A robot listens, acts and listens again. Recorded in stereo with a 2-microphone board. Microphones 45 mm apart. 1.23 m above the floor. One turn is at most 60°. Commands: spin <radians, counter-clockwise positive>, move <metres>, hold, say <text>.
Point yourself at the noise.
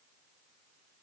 hold
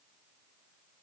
hold
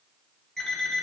spin 0.52
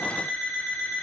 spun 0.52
spin 1.05
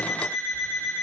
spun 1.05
spin 1.05
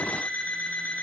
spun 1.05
spin 0.61
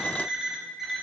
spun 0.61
say Facing the alarm clock, over 4 m away.